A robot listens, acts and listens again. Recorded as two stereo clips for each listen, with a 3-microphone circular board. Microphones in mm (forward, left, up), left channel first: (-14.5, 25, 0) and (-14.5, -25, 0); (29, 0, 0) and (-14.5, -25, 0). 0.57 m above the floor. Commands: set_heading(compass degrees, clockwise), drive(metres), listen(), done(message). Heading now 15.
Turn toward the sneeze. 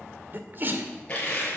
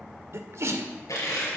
set_heading(150)
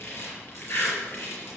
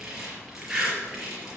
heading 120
set_heading(150)
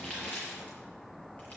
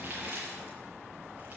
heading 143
done("Facing where the sneeze came from. I can't hear it now.")